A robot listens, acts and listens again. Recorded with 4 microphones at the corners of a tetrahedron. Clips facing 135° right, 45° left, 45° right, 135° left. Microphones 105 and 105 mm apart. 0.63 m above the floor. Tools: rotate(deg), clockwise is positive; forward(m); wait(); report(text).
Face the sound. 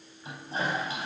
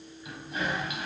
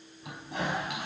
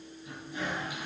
rotate(75)
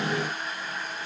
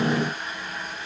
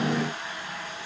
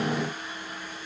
rotate(45)
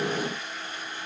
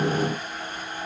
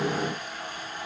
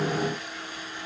report("Facing the toilet flushing.")